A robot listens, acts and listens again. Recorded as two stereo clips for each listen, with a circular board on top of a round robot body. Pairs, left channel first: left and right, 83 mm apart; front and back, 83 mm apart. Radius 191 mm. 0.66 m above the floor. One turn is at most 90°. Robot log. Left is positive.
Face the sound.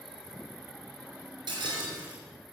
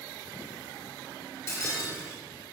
note: The breaking glass: 60° right.
cmd yaw -60
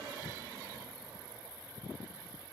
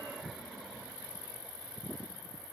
end: I heard breaking glass from this way, but can't make it out now.